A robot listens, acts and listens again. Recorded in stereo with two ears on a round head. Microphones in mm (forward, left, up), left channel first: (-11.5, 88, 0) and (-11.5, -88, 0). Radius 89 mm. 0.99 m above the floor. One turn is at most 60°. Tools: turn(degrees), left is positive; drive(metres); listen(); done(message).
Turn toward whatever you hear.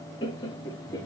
turn(degrees=20)
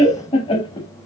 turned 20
turn(degrees=25)
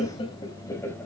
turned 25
turn(degrees=30)
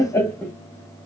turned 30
turn(degrees=30)
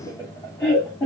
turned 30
turn(degrees=30)
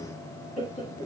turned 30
turn(degrees=60)
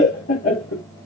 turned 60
turn(degrees=60)
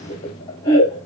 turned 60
turn(degrees=25)
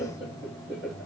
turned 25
turn(degrees=-15)
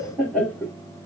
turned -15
done("Facing the laughter.")